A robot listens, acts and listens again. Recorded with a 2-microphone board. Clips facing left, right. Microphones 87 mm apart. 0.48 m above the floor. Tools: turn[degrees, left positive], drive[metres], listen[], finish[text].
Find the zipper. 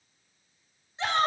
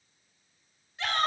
Action: listen[]
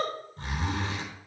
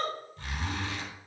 Thought: The zipper: about 35° left or 145° left.
Action: turn[35]
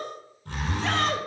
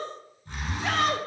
Thought: So it is at 110° left.
Action: turn[110]
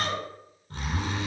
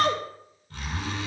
Thought: The zipper is now 35° left.
Action: turn[35]
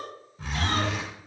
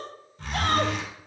Action: finish[Facing the zipper.]